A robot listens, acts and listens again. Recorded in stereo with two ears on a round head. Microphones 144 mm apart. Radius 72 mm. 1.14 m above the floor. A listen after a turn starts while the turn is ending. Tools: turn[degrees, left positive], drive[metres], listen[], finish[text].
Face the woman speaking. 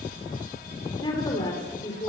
Thought: The woman speaking: about 25° left or 155° left.
Action: turn[25]
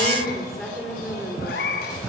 Action: finish[Found it: a woman speaking, straight ahead, over 4 m away.]